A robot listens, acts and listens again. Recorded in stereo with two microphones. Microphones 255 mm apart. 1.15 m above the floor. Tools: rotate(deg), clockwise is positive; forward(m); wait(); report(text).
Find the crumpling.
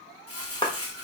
rotate(-65)
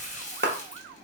rotate(-30)
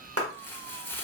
rotate(-10)
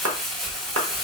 report("Facing the crumpling.")